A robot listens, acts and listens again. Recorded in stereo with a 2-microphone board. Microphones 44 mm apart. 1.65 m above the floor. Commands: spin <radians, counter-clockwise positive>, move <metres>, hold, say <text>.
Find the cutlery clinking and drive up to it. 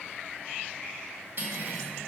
spin -0.87
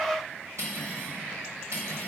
spin -1.31
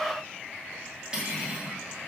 spin -0.35
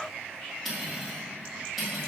move 1.0
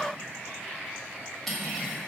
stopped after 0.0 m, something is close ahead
say Blocked. The cutlery clinking is further on, straight ahead.